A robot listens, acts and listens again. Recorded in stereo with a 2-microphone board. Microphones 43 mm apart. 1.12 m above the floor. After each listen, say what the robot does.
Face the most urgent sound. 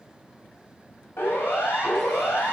Turn 65° left.
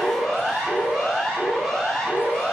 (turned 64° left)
Facing the siren, over 4 m away.